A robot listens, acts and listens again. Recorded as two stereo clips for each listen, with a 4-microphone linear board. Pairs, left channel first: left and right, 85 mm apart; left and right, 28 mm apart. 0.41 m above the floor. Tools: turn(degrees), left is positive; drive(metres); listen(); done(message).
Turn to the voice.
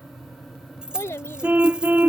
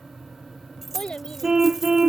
turn(degrees=30)
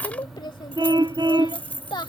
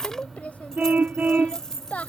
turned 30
turn(degrees=115)
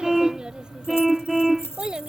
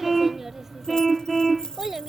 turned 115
turn(degrees=-10)
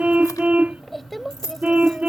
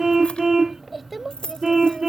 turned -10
done("Facing the child speaking.")